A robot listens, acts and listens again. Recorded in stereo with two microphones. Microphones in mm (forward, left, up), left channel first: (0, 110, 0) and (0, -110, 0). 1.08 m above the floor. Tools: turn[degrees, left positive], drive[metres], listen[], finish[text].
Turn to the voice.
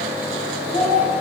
Thought: The child speaking: about 35° left or 145° left.
Action: turn[35]
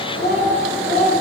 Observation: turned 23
Thought: The child speaking: about 50° left or 130° left.
Action: turn[50]
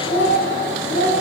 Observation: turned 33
Thought: So it is at 105° left.
Action: turn[105]
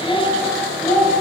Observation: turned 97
Thought: The child speaking is now 15° left.
Action: turn[15]
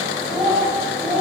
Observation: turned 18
Action: finish[Found it: a child speaking, straight ahead.]